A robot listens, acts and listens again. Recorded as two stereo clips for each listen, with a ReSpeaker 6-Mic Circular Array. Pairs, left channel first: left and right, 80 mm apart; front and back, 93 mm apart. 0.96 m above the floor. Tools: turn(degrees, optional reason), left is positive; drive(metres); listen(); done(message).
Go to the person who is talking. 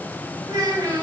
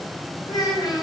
turn(degrees=-45, reason="The child speaking: 45° right.")
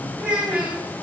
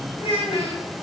turn(degrees=-15, reason="The child speaking is now 15° right.")
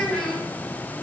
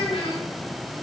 drive(metres=1.0)
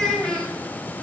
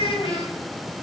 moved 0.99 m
drive(metres=1.0)
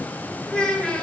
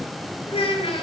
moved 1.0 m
turn(degrees=10, reason="The child speaking is now 10° left.")
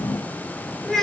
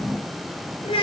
drive(metres=1.0)
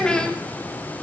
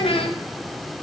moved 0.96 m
turn(degrees=10, reason="The child speaking is now 10° left.")
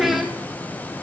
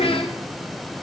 drive(metres=1.0)
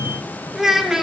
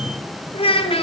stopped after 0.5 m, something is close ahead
done("I am next to the child speaking.")